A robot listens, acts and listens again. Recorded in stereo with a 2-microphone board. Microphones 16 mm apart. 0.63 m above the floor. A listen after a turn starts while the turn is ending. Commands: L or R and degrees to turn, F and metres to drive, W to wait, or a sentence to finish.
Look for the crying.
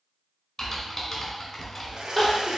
L20
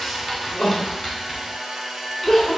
L140
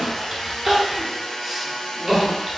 R20
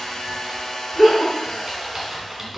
Facing the crying.